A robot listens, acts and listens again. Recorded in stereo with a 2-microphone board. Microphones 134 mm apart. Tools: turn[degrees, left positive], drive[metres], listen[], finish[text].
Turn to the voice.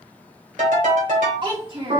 Thought: The child speaking: about 45° right or 135° right.
Action: turn[-45]
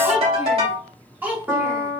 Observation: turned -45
Thought: So it is at 15° right.
Action: turn[-15]
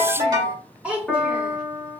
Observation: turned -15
Thought: The child speaking is now 10° right.
Action: turn[-10]
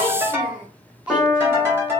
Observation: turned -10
Thought: The child speaking is now 10° right.
Action: turn[-10]
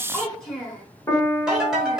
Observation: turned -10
Action: finish[Found it: a child speaking, straight ahead.]